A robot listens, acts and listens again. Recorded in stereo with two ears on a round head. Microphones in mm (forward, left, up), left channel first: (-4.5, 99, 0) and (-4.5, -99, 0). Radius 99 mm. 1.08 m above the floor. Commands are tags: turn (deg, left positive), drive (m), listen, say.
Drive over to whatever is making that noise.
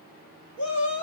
<turn deg="55"/>
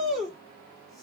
<drive m="1.0"/>
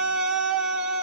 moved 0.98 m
<drive m="1.0"/>
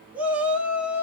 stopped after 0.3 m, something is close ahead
<say>I am next to the shout.</say>